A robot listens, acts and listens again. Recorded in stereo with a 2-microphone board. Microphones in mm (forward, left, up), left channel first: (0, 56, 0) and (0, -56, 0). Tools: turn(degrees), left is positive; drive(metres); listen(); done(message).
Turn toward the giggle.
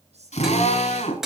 turn(degrees=-70)
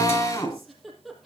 done("Facing the giggle.")